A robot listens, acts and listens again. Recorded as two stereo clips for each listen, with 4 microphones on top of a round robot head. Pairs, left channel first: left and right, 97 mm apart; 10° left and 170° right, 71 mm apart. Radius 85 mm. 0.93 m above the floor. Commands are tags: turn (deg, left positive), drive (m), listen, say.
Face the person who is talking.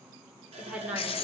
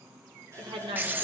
<turn deg="-170"/>
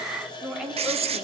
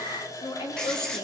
<say>Facing the woman speaking.</say>